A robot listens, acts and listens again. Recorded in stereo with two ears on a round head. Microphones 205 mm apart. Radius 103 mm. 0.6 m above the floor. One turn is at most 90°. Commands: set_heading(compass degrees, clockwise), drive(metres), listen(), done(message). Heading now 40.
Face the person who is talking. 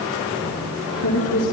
set_heading(310)
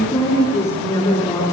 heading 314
set_heading(299)
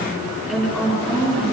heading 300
done("Facing the woman speaking.")